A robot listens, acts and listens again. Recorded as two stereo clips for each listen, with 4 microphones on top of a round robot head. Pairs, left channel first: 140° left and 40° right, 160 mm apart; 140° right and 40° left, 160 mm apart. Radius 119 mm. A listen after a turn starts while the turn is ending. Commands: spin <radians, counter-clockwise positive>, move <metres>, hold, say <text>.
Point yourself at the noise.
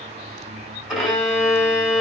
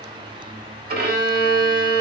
spin 0.79
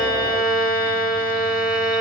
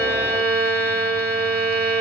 spin 0.44
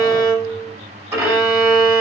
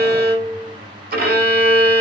spin 0.44
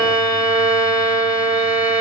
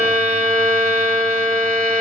spin 0.26
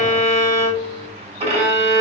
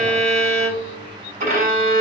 say Facing the violin.